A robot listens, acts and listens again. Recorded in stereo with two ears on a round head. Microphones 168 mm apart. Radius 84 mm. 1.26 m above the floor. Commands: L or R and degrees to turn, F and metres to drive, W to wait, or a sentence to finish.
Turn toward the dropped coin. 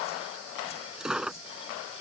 R30
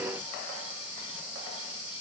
W
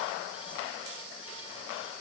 I heard a dropped coin, but can't make it out now. It was about 25° left or 145° right.